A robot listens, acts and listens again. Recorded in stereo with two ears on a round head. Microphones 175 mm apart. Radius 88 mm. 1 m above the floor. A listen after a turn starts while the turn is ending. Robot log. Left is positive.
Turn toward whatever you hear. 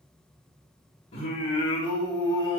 note: The singing: about 20° left or 160° left.
cmd yaw +20
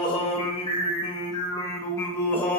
cmd yaw +30
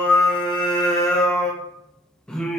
cmd yaw +30
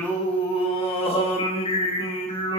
note: So it is at 150° left.
cmd yaw +150
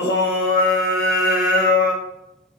note: The singing is now 45° left.
cmd yaw +45
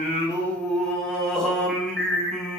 end: Facing the singing.